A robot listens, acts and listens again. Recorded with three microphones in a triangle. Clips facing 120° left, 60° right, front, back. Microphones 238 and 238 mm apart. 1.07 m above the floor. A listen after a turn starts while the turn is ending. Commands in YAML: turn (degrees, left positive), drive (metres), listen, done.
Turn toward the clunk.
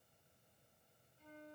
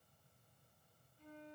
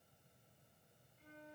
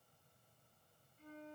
listen: true
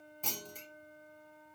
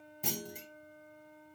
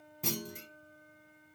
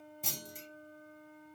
turn: 15
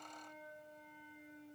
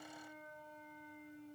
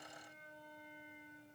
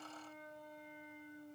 done: "Facing where the clunk came from. I can't hear it now."